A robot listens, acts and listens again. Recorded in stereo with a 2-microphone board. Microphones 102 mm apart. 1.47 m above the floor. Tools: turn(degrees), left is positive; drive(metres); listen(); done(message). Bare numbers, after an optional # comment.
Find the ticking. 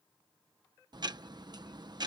# The ticking: about 45° right or 135° right.
turn(-45)
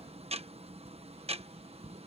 # So it is at 95° right.
turn(-95)
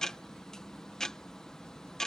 done("Found it: ticking, straight ahead.")